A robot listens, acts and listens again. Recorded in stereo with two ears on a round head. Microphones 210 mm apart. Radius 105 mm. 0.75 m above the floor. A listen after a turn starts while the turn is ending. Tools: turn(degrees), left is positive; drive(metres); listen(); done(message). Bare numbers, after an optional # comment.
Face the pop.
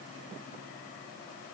listen()
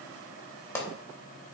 turn(30)
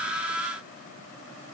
listen()
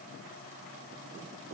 done("I heard a pop, but can't make it out now. It was about 20° right or 140° left.")